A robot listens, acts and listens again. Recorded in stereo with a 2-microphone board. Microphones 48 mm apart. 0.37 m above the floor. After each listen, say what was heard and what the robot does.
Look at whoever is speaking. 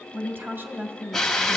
The woman speaking: about 50° right or 130° right. Turn 50° right.
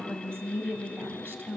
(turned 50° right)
So it is at 70° right. Turn 70° right.
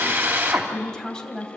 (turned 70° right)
The woman speaking is now 15° left. Turn 15° left.
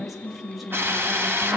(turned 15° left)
Found it: a woman speaking, straight ahead.